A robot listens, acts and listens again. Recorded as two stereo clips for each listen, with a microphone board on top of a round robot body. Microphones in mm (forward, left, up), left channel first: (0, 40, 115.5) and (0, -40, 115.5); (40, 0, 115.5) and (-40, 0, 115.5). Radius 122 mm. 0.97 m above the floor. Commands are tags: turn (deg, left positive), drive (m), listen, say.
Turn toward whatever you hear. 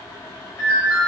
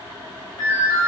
<turn deg="35"/>
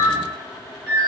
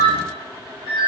<say>Found it: a ringtone, straight ahead.</say>